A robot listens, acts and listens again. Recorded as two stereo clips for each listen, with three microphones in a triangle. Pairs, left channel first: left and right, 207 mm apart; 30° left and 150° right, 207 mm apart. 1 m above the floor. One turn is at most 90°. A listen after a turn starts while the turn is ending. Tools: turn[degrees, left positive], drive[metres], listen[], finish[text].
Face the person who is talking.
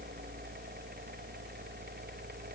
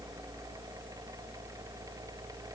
Action: listen[]
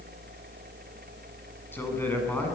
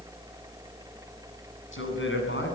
Thought: The man speaking: 10° left.
Action: turn[10]
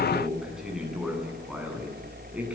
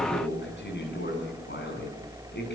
Action: finish[Facing the man speaking.]